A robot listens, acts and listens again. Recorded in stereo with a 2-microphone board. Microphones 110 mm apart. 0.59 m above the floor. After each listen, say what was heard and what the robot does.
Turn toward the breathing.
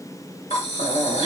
The breathing: about 70° left or 110° left. Turn 70° left.
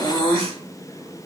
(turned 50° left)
So it is at 40° left. Turn 40° left.
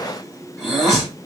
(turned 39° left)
Found it: breathing, straight ahead.